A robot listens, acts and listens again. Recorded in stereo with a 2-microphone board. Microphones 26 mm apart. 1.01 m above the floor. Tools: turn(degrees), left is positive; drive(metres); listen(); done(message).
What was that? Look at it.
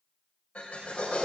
turn(degrees=50)
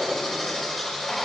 done("Found it: a drill, straight ahead, over 4 m away.")